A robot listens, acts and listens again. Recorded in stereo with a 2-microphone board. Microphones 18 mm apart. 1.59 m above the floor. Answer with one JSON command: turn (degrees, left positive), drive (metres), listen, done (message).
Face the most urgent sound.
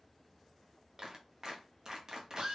{"listen": true}
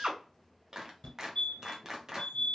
{"turn": 60}
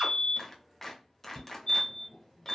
{"turn": 50}
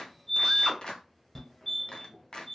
{"turn": 15}
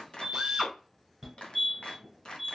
{"done": "Found it: a fire alarm, straight ahead, 1 to 2 m away."}